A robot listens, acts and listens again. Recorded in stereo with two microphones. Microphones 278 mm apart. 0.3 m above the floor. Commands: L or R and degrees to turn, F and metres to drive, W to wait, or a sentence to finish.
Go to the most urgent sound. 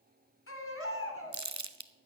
L50
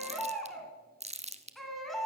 F1.0
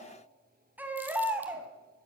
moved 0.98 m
F1.0
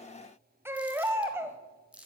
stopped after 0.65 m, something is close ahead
R10
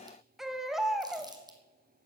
Arrived at the baby crying, straight ahead.